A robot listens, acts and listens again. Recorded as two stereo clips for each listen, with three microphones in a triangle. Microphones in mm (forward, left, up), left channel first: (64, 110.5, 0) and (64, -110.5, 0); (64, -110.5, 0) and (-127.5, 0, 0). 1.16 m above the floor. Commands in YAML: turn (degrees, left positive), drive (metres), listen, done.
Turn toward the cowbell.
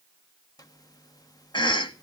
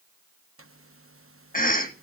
listen: true
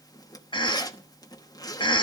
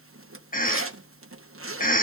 listen: true
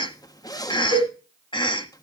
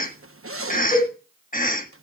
turn: 75
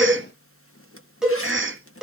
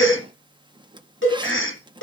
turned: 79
done: "Found it: a cowbell, straight ahead."